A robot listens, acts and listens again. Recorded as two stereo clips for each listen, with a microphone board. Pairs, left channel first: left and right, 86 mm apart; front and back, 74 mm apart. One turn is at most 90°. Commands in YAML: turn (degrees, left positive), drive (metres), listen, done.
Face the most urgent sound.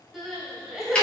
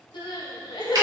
done: "Found it: crying, straight ahead."